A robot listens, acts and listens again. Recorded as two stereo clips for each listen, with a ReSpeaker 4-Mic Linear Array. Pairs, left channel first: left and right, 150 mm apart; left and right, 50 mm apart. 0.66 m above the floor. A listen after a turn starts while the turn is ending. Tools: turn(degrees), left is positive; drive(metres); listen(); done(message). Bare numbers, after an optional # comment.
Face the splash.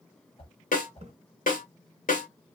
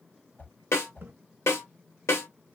# The splash: about 45° right or 135° right.
turn(-45)
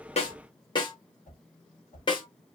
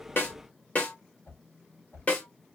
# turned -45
listen()
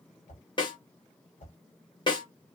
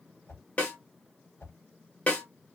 done("I heard a splash, but can't make it out now. It was about straight ahead or 90° right.")